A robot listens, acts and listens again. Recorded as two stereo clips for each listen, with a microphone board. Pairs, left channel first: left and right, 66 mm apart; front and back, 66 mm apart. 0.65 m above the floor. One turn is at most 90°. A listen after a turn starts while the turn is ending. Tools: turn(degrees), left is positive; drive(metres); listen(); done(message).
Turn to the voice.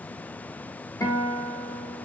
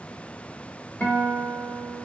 listen()
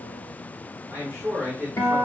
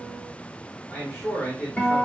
turn(degrees=-45)
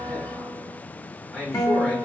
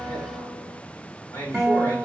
done("Found it: a man speaking, straight ahead.")